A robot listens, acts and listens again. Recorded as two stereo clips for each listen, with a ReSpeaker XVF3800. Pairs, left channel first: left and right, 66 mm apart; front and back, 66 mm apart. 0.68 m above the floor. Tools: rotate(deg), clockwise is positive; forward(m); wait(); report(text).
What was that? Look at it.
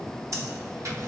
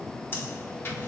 rotate(50)
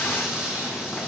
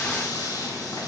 rotate(10)
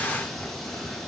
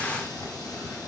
wait()
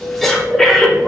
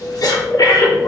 report("Found it: breathing, straight ahead, under 1 m away.")